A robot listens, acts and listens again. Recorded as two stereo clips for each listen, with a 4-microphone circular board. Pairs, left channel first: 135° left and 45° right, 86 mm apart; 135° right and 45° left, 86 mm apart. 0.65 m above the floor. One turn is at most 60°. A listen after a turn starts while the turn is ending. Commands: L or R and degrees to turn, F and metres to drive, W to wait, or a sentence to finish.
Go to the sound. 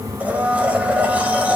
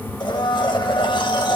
R60
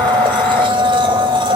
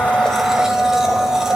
R40
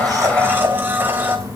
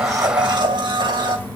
L20
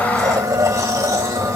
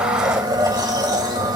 F1.0
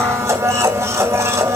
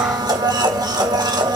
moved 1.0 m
L10
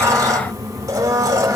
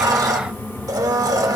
F1.0
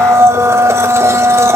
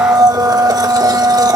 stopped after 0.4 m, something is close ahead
L10
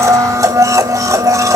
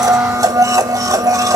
Arrived at the blender, straight ahead.